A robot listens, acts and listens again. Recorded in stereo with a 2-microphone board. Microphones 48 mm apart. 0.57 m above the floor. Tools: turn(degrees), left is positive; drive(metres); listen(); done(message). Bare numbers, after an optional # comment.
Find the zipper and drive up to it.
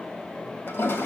listen()
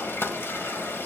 listen()
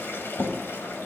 done("I can't make out a zipper to turn to.")